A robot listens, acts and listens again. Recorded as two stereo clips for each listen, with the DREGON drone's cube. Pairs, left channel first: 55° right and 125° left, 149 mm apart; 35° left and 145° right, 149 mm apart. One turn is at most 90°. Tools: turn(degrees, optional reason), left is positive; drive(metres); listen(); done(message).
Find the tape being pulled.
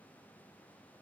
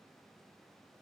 listen()
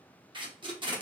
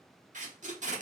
turn(degrees=90, reason="The tape being pulled: straight behind.")
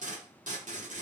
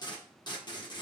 turn(degrees=90, reason="The tape being pulled is now 95° left.")
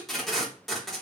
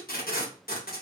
turn(degrees=35, reason="The tape being pulled is now 35° left.")
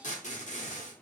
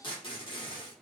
turn(degrees=-20, reason="The tape being pulled is now 20° right.")
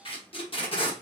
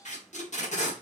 done("Facing the tape being pulled, under 1 m away.")